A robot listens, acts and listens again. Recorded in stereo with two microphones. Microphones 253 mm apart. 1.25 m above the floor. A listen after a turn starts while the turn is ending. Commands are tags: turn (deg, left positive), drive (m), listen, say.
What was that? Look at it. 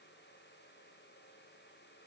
<listen/>
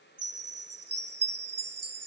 <turn deg="-70"/>
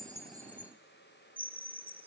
<say>Facing the chime.</say>